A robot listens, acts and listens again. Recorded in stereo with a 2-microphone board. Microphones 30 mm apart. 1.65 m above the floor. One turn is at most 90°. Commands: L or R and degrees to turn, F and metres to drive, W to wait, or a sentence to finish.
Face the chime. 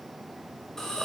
W
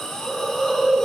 W
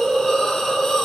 I can't make out a chime, only a hiss.